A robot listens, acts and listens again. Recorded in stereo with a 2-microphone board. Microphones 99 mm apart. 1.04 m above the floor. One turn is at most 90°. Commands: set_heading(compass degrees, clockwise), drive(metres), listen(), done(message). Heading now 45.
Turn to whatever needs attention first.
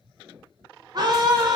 set_heading(90)
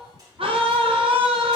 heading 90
set_heading(175)
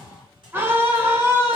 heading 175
set_heading(200)
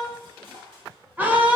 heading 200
set_heading(220)
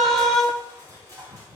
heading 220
done("Found it: a scream, straight ahead.")